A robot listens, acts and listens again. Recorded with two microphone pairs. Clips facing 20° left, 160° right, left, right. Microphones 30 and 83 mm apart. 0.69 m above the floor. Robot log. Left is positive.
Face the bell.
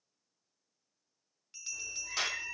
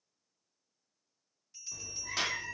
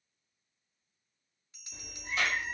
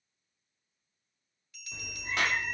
note: The bell: 25° left.
cmd yaw +25
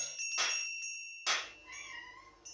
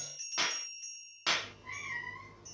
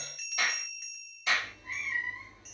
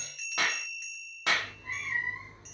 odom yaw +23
end: Facing the bell.